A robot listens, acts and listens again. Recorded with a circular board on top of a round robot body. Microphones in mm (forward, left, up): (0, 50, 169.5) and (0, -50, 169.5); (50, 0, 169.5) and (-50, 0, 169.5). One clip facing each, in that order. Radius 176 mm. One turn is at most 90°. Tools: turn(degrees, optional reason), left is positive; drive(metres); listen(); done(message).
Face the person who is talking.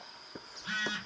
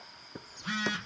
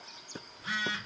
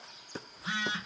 listen()
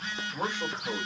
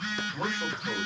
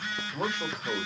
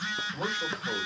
turn(degrees=10, reason="The man speaking: 10° left.")
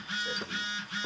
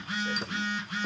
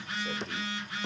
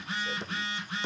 listen()
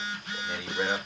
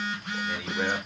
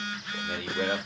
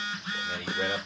done("Found it: a man speaking, straight ahead.")